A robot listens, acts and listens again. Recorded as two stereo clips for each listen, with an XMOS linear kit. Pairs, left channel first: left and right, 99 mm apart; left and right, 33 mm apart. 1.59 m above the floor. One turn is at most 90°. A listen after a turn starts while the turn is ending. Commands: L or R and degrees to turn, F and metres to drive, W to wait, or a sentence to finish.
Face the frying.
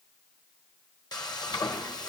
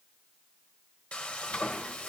L45
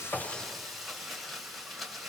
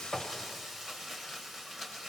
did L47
Facing the frying, 1 to 2 m away.